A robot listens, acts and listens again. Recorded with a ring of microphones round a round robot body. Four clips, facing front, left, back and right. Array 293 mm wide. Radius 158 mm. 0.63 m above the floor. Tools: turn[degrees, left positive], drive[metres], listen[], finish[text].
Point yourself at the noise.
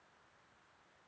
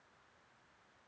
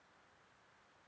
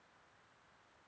Action: listen[]
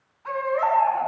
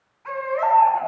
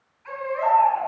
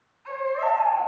Thought: The baby crying: 40° left.
Action: turn[40]
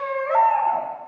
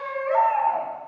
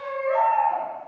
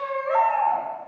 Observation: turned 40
Thought: The baby crying is now 15° right.
Action: turn[-15]
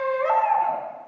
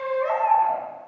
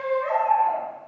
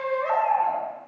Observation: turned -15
Action: finish[Found it: a baby crying, straight ahead, over 4 m away.]